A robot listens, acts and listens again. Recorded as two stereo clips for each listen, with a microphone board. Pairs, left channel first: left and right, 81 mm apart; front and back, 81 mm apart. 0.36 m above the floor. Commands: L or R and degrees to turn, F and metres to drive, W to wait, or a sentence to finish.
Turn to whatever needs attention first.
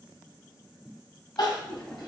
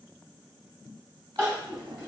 L120
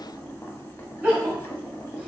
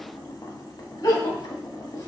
R20
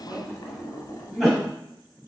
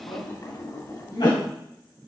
Facing the crying.